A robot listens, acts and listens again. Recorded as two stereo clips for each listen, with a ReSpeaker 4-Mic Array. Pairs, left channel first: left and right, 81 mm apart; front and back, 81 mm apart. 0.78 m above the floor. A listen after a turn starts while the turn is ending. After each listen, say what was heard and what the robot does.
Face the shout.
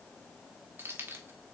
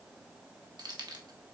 Keep listening.
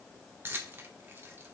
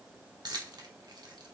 Keep listening.
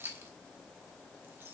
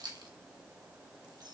I can't make out a shout, only keys jangling.